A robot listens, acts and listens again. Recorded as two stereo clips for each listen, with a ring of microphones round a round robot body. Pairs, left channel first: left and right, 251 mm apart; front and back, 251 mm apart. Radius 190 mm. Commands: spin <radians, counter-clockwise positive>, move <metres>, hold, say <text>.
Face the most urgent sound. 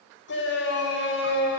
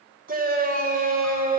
spin 2.27
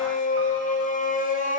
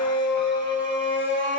spin 0.61
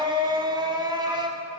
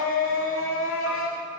spin -0.35
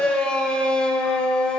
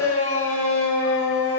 say Facing the shout.